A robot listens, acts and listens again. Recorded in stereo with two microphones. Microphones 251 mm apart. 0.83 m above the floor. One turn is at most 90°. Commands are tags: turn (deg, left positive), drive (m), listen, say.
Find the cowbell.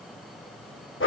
<listen/>
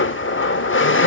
<listen/>
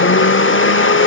<say>I can't make out a cowbell to turn to.</say>